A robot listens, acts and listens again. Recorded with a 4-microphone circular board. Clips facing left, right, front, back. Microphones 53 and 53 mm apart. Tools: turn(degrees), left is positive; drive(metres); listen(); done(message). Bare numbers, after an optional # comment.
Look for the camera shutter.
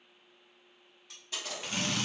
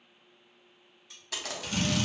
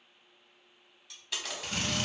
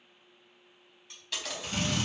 # The camera shutter: 85° right.
turn(-85)
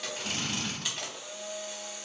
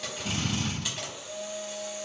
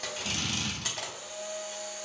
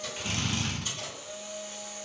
done("Facing the camera shutter.")